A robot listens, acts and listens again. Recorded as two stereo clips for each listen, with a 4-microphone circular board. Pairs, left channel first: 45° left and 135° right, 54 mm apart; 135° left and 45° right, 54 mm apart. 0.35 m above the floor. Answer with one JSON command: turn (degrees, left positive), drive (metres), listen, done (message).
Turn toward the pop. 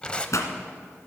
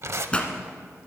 {"turn": 65}
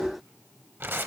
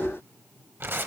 {"done": "I heard a pop from this way, but can't make it out now."}